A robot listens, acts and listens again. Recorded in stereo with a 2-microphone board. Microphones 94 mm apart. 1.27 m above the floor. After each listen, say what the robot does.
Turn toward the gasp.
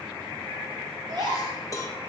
Turn 50° right.
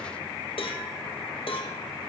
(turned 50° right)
Keep listening.
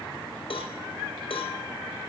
I heard a gasp, but can't make it out now. It was about straight ahead or 80° right.